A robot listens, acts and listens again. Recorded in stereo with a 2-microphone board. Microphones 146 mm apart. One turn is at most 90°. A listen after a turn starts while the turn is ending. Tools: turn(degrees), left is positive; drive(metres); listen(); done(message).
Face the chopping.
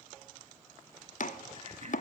turn(degrees=60)
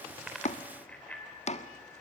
turn(degrees=55)
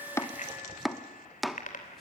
done("Found it: chopping, straight ahead.")